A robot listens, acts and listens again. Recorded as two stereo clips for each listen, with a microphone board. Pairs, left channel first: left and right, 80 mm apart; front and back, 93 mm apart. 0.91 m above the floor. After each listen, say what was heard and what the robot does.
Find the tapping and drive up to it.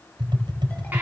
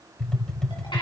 The tapping: 80° right. Turn 80° right.
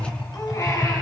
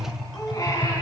The tapping is now 10° right. Turn 10° right.
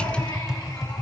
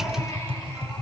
Drive 1.0 m forward.
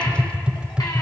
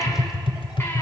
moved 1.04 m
The tapping is now 15° right. Turn 15° right.
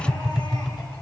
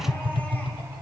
Drive 1.0 m forward.
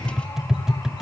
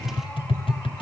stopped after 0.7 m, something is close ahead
I am next to the tapping.